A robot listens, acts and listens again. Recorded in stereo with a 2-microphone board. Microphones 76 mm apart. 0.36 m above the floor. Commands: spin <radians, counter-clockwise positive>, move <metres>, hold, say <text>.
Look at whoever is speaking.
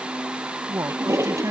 spin -0.79
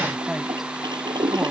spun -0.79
hold
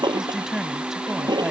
say Found it: a woman speaking, straight ahead.